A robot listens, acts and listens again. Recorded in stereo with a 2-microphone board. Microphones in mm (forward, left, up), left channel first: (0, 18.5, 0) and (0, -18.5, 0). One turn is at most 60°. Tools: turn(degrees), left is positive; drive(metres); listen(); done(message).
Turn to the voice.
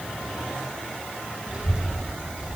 turn(degrees=-25)
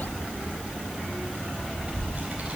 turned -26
turn(degrees=-60)
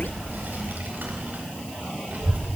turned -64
turn(degrees=-60)
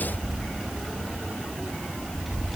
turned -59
done("Found it: a child speaking, straight ahead, 2 to 4 m away.")